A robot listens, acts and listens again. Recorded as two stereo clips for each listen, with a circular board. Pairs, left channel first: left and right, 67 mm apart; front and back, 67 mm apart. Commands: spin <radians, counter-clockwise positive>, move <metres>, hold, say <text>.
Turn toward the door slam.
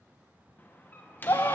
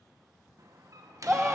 spin 2.62
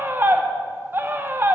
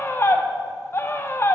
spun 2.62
say I heard a door slam from this way, but can't make it out now.